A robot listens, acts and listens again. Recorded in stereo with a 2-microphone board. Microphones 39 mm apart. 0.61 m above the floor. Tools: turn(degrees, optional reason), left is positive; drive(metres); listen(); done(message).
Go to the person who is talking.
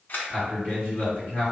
turn(degrees=60, reason="The man speaking: about 60° left or 120° left.")
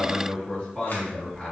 turn(degrees=30, reason="So it is at 30° left.")
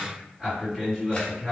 turn(degrees=-10, reason="The man speaking is now 10° right.")
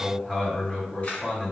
drive(metres=1.0)
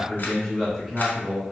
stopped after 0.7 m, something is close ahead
done("I am next to the man speaking.")